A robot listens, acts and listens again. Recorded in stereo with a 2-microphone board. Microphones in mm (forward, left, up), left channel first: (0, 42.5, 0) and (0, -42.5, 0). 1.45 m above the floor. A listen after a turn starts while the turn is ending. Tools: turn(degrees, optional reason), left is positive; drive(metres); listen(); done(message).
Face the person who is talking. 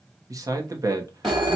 turn(degrees=-40, reason="The man speaking: about 40° right or 140° right.")
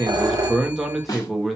done("Facing the man speaking.")